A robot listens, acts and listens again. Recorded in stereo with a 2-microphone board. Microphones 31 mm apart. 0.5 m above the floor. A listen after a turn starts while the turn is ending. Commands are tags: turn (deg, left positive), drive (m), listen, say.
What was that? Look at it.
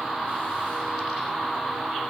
<listen/>
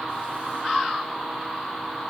<listen/>
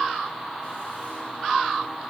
<say>I can't make out anything to turn to.</say>